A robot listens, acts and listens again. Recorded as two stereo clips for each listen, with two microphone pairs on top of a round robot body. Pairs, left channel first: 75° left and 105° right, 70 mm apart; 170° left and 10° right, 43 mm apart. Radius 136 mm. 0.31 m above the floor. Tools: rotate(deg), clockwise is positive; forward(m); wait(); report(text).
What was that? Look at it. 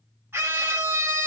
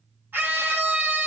rotate(50)
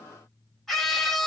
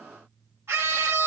report("Found it: a scream, straight ahead.")